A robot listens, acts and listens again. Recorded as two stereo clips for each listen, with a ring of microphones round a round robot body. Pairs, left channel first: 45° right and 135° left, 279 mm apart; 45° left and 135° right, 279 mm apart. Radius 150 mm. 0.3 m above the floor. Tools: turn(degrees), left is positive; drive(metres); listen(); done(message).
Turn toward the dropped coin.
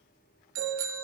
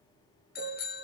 listen()
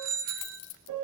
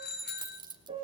turn(degrees=-60)
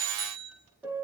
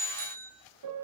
done("I heard a dropped coin from this way, but can't make it out now.")